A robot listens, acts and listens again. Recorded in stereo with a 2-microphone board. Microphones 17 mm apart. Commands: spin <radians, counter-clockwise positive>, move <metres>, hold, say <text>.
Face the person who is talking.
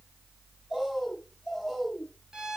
hold
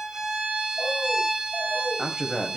spin -1.05
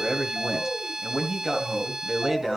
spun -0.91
spin -0.44
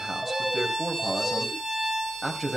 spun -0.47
say Found it: a man speaking, straight ahead, 2 to 4 m away.